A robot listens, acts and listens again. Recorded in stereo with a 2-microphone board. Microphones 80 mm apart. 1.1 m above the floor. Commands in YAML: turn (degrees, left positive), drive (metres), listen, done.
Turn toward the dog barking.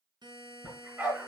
turn: -20
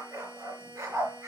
turn: -140
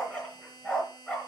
turn: 10
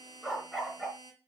done: "Facing the dog barking, over 4 m away."